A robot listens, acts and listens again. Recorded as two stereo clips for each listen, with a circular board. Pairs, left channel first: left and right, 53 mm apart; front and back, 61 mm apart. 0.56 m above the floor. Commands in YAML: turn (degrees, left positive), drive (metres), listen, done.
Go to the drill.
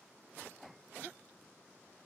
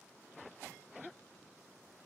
listen: true
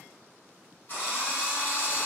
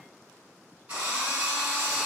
turn: 125
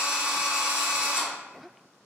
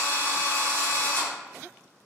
turn: -30
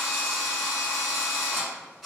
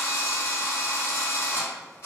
drive: 1.0
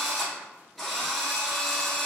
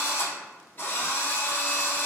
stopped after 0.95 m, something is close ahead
turn: 10
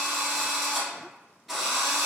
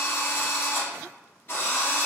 done: "Arrived at the drill, straight ahead."